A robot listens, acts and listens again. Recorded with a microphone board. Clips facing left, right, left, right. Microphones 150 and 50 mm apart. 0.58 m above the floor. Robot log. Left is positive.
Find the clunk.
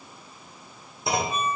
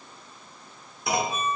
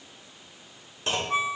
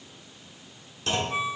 note: The clunk: about 30° left or 150° left.
cmd yaw +30
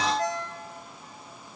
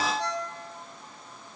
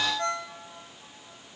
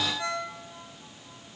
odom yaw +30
cmd idle
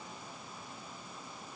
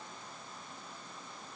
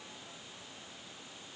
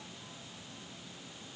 end: I heard a clunk, but can't make it out now. It was about straight ahead or 120° left.